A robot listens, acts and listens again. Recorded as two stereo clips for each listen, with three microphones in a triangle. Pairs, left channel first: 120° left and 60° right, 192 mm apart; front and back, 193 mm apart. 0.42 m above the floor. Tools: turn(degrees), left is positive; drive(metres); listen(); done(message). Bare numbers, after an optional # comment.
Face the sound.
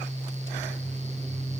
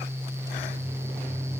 listen()
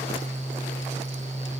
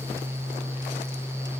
listen()
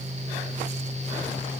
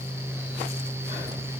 done("I can't make out anything to turn to.")